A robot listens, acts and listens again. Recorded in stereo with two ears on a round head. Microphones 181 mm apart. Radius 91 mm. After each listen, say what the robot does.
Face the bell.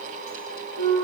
Keep listening.
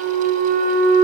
Keep listening.
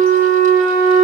I can't make out a bell, only a flute.